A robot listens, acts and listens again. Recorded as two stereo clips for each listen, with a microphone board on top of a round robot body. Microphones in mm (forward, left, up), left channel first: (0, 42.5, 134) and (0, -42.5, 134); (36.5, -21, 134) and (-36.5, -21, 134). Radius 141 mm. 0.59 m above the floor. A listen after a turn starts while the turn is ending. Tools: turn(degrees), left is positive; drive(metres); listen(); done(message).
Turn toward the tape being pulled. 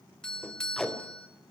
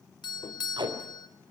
turn(degrees=175)
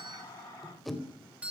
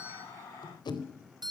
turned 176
done("Facing the tape being pulled.")